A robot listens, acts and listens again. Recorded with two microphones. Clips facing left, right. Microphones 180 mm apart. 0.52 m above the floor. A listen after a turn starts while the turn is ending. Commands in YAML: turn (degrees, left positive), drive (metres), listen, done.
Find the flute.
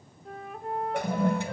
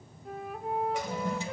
turn: -30
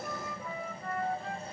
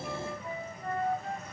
turn: -150
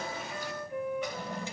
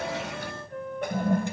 turn: 10
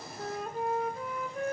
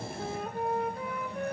done: "Found it: a flute, straight ahead."